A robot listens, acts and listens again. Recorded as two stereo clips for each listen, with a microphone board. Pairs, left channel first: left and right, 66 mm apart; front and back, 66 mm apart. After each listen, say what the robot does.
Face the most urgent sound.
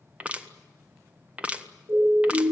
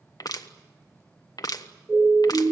Turn 115° right.
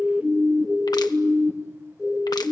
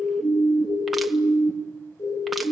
Found it: a siren, straight ahead, 2 to 4 m away.